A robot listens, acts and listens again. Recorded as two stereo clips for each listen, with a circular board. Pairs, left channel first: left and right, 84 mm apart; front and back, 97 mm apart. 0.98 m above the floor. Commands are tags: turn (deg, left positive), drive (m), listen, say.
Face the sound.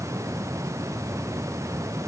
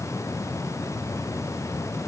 <listen/>
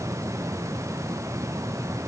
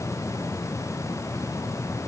<listen/>
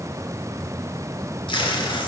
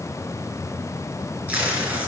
<turn deg="105"/>
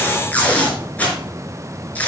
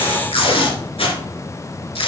<turn deg="20"/>
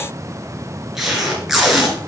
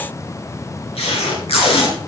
<say>Found it: tape being pulled, straight ahead.</say>